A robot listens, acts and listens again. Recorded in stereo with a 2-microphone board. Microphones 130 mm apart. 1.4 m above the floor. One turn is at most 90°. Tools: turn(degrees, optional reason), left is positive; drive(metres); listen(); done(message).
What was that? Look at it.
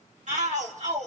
turn(degrees=-70, reason="The shout: about 70° right or 110° right.")
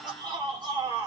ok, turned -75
turn(degrees=-35, reason="So it is at 35° right.")
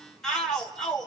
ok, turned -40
done("Found it: a shout, straight ahead, 2 to 4 m away.")